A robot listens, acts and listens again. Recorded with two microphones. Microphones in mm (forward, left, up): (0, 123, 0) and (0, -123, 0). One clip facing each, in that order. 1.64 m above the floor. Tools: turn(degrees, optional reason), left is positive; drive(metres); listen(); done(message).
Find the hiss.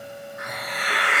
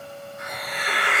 turn(degrees=70, reason="The hiss: about 70° left or 110° left.")
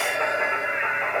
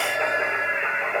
listen()
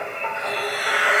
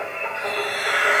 done("Facing the hiss.")